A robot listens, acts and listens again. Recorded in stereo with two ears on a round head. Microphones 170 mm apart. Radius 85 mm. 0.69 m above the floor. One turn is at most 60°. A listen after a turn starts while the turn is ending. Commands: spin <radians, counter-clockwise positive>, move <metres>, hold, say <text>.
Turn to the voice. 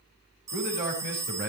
spin -0.79
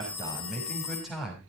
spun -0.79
say Facing the man speaking, over 4 m away.